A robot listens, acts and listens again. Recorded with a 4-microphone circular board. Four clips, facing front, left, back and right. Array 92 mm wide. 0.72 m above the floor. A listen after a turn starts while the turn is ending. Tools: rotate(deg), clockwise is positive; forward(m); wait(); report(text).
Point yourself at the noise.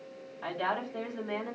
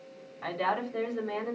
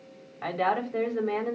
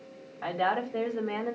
rotate(155)
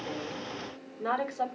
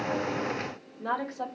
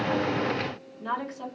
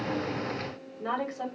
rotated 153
report("Facing the woman speaking, over 4 m away.")